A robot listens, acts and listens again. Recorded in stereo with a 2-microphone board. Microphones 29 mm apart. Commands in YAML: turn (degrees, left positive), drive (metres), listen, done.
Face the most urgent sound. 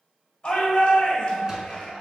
turn: 30
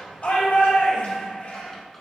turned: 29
turn: 115
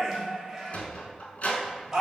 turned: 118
done: "Facing the shout, 1 to 2 m away."